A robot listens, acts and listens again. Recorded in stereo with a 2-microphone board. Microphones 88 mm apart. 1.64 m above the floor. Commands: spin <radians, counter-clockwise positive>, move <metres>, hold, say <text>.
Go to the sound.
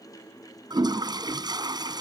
spin -0.87
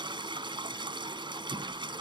spin -1.22
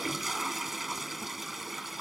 move 1.0
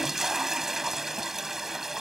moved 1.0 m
move 1.0
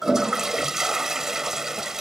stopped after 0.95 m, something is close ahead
spin -0.17
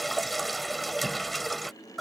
say Arrived at the toilet flushing, straight ahead.